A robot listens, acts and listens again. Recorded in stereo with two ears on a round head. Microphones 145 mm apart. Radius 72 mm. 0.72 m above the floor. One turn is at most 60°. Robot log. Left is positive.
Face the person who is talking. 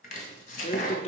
note: The man speaking: about 40° left or 140° left.
cmd yaw +40
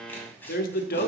note: So it is at 90° left.
cmd yaw +60
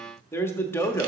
note: The man speaking is now 15° left.
cmd yaw +15
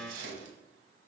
cmd idle
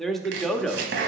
end: Found it: a man speaking, straight ahead.